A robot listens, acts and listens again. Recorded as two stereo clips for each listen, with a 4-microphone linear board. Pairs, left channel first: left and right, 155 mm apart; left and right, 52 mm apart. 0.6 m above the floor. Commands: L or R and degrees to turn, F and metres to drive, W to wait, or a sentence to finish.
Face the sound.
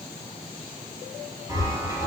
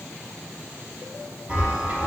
R20
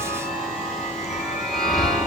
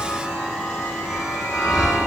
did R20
Facing the chime, over 4 m away.